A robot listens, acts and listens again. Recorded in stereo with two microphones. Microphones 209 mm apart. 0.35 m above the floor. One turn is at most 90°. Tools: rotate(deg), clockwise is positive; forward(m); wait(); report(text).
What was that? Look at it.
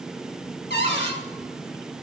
rotate(-55)
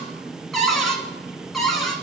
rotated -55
report("Found it: a cupboard door, straight ahead, 1 to 2 m away.")